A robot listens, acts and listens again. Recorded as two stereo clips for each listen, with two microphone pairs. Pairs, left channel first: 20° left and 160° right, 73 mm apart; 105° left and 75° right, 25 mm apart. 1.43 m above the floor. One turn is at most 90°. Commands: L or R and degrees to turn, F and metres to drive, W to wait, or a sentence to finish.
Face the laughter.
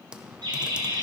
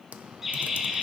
R90
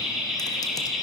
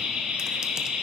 R75
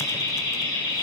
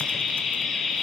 L30
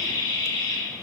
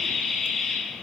L30
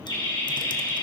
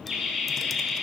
L25
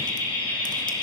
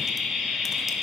L10
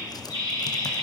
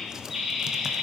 Facing the laughter.